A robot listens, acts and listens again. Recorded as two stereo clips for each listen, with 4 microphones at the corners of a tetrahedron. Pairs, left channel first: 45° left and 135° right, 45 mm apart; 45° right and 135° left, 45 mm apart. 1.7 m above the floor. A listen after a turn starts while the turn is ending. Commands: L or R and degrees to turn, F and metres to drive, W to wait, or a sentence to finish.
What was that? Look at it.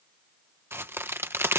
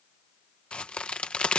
R110
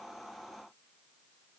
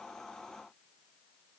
Facing where the crack came from. I can't hear it now.